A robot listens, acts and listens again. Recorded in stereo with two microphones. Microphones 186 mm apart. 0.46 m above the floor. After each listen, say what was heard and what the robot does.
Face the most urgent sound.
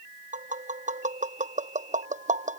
Keep listening.
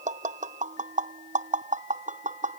Keep listening.
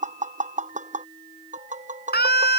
The scream: about 60° left or 120° left. Turn 60° left.
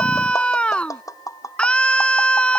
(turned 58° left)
Facing the scream.